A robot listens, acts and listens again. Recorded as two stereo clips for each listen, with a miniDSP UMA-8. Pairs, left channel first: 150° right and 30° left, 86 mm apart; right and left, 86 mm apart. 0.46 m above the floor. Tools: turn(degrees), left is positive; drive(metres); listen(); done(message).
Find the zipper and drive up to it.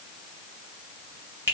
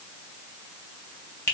listen()
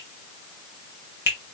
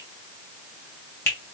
listen()
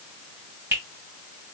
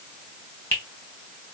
done("I can't make out a zipper to turn to.")